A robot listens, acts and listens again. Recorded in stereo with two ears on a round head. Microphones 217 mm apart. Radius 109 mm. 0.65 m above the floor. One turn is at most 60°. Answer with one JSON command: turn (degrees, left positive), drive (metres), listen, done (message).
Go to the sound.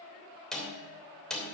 {"turn": 30}
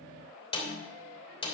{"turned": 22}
{"turn": 60}
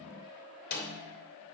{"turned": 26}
{"turn": 60}
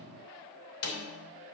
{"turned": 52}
{"turn": 60}
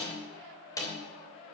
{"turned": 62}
{"turn": 15}
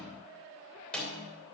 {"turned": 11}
{"drive": 1.0}
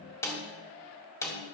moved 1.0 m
{"turn": 15}
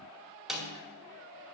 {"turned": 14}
{"drive": 1.0}
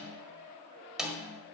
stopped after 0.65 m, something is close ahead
{"done": "Arrived at the snare drum, straight ahead."}